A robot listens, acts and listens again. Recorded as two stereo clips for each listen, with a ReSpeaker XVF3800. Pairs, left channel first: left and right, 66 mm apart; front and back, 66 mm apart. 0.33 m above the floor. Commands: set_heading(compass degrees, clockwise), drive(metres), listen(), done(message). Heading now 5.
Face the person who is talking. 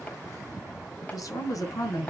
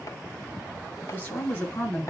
set_heading(305)
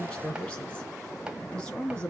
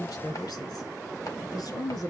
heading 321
set_heading(306)
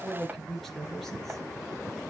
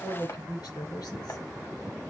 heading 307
done("Facing the woman speaking.")